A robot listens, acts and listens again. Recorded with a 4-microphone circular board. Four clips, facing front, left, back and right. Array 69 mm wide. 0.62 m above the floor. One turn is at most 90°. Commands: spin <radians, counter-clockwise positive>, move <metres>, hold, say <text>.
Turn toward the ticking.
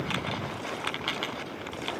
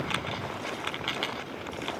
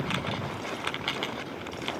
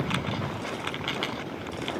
hold
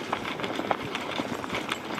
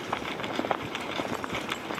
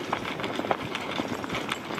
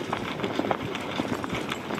hold
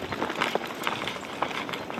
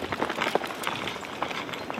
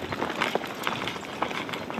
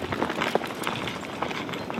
say I can't make out ticking to turn to.